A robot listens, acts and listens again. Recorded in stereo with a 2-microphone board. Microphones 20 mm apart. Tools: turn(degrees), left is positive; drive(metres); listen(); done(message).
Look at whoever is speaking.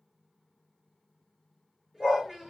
turn(degrees=-35)
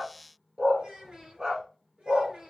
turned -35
turn(degrees=-110)
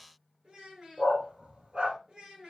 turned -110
turn(degrees=-30)
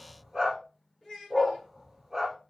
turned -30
turn(degrees=10)
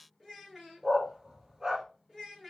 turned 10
done("Found it: a child speaking, straight ahead, 2 to 4 m away.")